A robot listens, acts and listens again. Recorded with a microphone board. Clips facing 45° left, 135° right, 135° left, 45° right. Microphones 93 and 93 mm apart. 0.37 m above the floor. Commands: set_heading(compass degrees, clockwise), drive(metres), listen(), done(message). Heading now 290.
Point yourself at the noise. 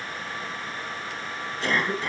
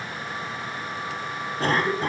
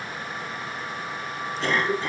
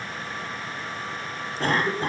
set_heading(20)
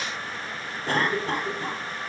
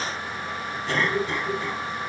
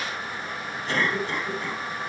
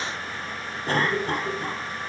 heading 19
done("Found it: a cough, straight ahead.")